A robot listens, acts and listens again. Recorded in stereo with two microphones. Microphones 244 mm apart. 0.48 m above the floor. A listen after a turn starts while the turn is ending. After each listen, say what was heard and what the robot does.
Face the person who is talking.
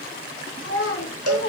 The child speaking: about 55° left or 125° left. Turn 55° left.
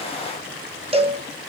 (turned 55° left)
Keep listening.
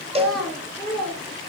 Found it: a child speaking, straight ahead.